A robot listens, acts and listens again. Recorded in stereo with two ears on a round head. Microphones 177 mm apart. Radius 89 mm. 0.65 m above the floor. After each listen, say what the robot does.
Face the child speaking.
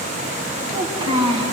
Turn 25° right.
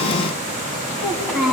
Found it: a child speaking, straight ahead, 2 to 4 m away.